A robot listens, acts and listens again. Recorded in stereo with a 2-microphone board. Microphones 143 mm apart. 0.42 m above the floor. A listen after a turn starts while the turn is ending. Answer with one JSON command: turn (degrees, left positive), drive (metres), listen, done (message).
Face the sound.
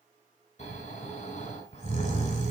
{"turn": 50}
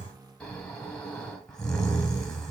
{"done": "Found it: snoring, straight ahead."}